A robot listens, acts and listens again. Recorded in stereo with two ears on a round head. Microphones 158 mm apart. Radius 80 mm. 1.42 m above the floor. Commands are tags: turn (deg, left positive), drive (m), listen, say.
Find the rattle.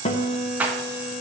<turn deg="-30"/>
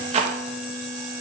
<turn deg="-140"/>
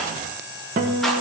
<listen/>
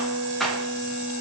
<say>Facing the rattle, 1 to 2 m away.</say>